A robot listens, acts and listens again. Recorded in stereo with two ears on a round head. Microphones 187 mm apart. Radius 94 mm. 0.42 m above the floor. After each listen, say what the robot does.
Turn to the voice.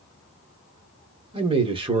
Turn 25° right.
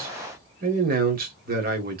Turn 125° right.
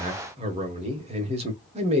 Turn 35° right.
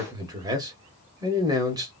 Turn 20° right.
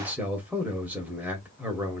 Turn 10° right.
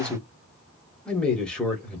Found it: a man speaking, straight ahead.